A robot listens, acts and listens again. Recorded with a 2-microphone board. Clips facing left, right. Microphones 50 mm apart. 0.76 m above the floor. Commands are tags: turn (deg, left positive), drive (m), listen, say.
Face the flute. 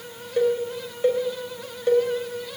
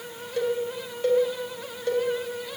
<listen/>
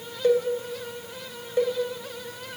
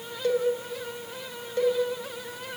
<listen/>
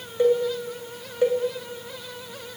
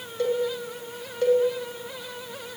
<say>I can't make out a flute to turn to.</say>